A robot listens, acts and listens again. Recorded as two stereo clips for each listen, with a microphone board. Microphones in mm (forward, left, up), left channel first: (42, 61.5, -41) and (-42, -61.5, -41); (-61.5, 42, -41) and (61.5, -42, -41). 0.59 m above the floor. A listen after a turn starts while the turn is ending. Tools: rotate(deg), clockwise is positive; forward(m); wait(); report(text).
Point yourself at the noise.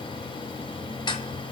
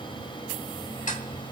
rotate(-115)
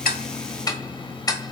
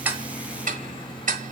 rotate(10)
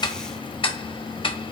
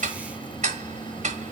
report("Facing the ticking, 1 to 2 m away.")